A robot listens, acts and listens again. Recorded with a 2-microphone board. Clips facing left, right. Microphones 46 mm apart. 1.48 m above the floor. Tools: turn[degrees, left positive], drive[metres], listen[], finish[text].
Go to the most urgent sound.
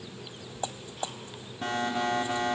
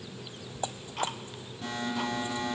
Thought: The alarm: about 50° left or 130° left.
Action: turn[50]
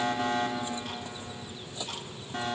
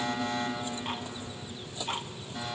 Thought: So it is at 75° left.
Action: turn[75]
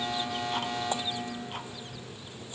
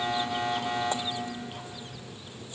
Thought: The alarm is now 15° right.
Action: turn[-15]
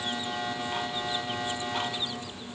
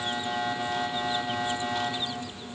Action: drive[1.0]
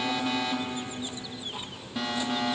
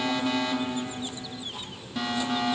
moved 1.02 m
Action: drive[1.0]
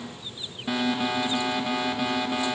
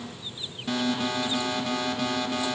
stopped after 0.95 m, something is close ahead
Thought: The alarm is now 15° left.
Action: turn[15]
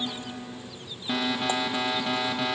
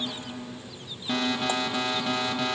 Thought: The alarm is now 10° left.
Action: turn[10]
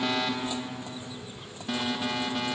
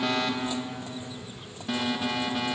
Action: finish[I am next to the alarm.]